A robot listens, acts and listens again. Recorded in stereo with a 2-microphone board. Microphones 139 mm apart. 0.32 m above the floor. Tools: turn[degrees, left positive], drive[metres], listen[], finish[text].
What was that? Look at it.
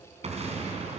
Thought: The explosion: about 50° right or 130° right.
Action: turn[-50]
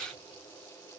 Action: listen[]
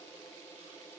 Action: finish[I heard an explosion, but can't make it out now. It was about straight ahead or 80° right.]